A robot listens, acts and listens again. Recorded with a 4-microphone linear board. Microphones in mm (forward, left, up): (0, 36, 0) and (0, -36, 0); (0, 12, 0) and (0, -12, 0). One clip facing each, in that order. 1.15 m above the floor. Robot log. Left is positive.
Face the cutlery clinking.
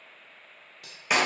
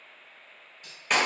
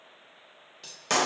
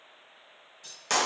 note: The cutlery clinking: about 70° left or 110° left.
cmd yaw +70
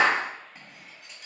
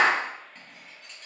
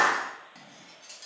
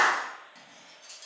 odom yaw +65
end: Facing the cutlery clinking, 1 to 2 m away.